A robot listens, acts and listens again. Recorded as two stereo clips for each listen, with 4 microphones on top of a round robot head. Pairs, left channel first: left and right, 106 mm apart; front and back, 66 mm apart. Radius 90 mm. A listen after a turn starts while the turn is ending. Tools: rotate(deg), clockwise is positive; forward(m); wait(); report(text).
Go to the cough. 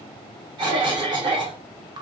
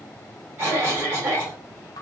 rotate(125)
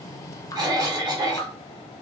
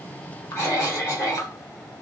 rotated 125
rotate(45)
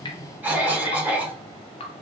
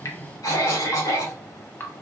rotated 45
rotate(20)
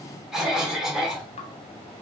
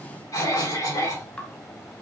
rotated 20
forward(1.0)
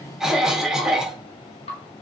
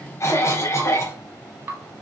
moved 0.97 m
forward(1.0)
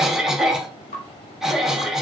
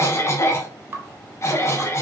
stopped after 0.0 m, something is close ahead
report("I am next to the cough.")